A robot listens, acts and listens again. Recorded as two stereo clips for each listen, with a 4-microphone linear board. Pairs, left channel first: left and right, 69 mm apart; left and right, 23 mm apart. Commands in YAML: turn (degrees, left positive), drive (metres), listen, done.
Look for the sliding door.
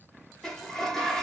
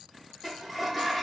turn: 30
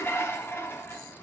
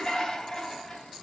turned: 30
turn: 145
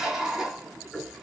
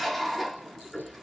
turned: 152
done: "Found it: a sliding door, straight ahead."